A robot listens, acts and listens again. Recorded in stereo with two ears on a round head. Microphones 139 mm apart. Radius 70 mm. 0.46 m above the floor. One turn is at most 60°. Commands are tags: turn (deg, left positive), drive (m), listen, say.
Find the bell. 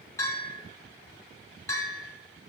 <turn deg="20"/>
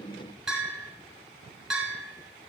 <say>Facing the bell, 2 to 4 m away.</say>